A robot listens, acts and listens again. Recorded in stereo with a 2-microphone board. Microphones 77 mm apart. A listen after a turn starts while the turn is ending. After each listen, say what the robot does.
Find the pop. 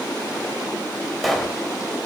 Turn 30° left.
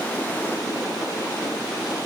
Keep listening.
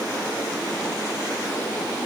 I heard a pop, but can't make it out now. It was about 30° right or 150° left.